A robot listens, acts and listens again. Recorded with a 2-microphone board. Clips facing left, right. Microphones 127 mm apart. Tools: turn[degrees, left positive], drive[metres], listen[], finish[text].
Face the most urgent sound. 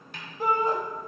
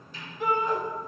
Thought: The shout: about 35° left or 145° left.
Action: turn[35]
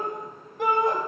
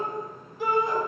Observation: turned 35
Thought: So it is at 115° left.
Action: turn[115]
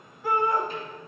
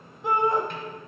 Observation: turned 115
Thought: The shout is now 25° right.
Action: turn[-25]
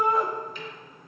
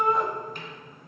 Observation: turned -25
Action: finish[Found it: a shout, straight ahead, 1 to 2 m away.]